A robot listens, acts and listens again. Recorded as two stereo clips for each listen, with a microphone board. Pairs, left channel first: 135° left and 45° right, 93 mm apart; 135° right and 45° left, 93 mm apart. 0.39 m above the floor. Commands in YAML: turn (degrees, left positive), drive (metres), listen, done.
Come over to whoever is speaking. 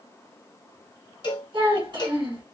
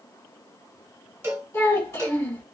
turn: -65
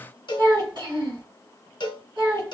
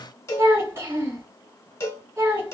drive: 1.0
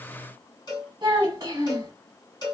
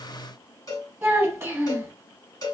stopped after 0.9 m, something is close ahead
done: "Arrived at the child speaking, straight ahead."